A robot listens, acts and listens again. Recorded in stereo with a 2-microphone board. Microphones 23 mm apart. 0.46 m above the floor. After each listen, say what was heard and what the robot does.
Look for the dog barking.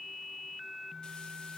Keep listening.
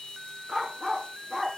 Turn 30° left.
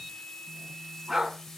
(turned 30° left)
So it is at 15° right. Turn 15° right.
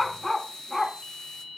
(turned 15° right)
The dog barking is now 15° left. Turn 15° left.
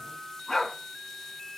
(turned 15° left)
The dog barking is now 15° left. Turn 15° left.
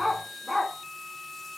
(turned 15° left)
Facing the dog barking.